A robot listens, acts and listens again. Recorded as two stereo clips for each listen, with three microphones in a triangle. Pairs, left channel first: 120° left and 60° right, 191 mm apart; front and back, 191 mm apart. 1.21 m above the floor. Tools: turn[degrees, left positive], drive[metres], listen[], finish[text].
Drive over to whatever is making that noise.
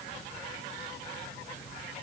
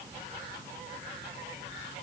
Action: listen[]
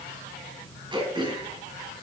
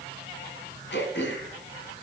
Action: drive[1.0]
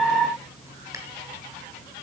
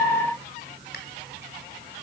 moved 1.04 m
Action: listen[]
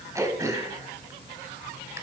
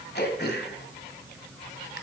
Thought: The throat clearing is now 10° left.
Action: turn[10]
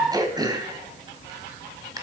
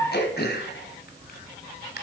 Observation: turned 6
Action: drive[1.0]
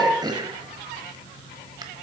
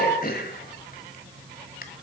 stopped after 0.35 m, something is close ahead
Action: finish[Arrived at the throat clearing, straight ahead.]